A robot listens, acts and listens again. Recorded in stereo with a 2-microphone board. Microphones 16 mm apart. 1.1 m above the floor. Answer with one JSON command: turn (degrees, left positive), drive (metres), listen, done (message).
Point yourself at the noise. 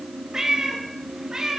{"turn": -30}
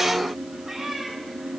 {"turn": -10}
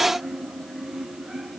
{"listen": true}
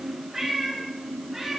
{"turn": -10}
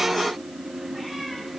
{"listen": true}
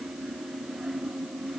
{"listen": true}
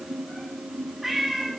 {"done": "Found it: a cat meowing, straight ahead, over 4 m away."}